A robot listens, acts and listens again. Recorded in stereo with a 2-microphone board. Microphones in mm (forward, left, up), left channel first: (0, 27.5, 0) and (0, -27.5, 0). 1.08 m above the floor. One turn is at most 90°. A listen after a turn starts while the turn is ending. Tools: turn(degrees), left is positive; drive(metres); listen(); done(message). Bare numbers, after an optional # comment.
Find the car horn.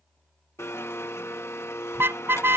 # The car horn: about 45° right or 135° right.
turn(-45)
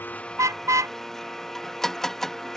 # So it is at 85° right.
turn(-85)
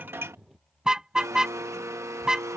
# The car horn is now 15° right.
turn(-15)
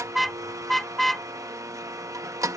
done("Facing the car horn.")